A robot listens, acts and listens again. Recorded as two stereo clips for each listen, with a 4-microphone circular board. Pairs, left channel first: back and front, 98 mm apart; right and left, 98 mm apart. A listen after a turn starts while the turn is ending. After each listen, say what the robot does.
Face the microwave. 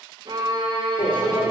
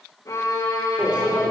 Turn 170° left.
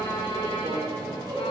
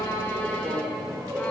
Turn 40° left.
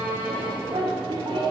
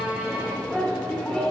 Turn 10° right.
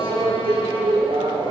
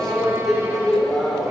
Found it: a microwave, straight ahead, 2 to 4 m away.